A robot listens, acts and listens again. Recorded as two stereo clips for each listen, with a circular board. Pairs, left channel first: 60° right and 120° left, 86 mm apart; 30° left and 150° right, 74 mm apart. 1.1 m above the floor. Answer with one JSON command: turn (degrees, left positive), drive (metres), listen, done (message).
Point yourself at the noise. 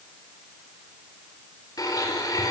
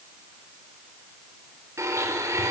{"turn": -105}
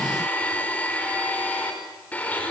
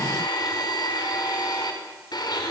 {"turn": 10}
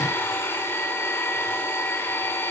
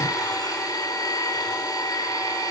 {"done": "Facing the blender."}